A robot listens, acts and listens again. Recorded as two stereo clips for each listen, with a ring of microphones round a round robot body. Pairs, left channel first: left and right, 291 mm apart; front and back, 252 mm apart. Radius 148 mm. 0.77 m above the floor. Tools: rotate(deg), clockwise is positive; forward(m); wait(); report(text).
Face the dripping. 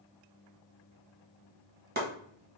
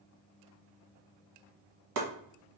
wait()
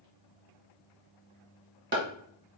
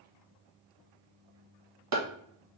wait()
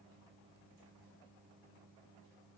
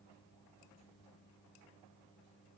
report("I can't make out dripping to turn to.")